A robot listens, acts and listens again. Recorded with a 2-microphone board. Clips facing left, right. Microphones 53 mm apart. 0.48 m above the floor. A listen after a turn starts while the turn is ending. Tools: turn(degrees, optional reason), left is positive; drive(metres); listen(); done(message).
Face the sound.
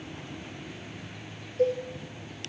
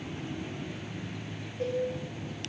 turn(degrees=90)
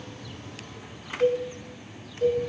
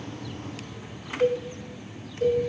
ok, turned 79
done("Facing the cowbell.")